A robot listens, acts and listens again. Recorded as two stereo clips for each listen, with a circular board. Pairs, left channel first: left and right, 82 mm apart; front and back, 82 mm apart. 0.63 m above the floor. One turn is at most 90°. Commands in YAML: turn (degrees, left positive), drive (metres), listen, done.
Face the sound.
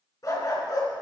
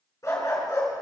turn: 50
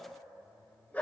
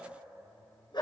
turn: 20
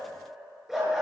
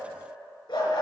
done: "Facing the dog barking, over 4 m away."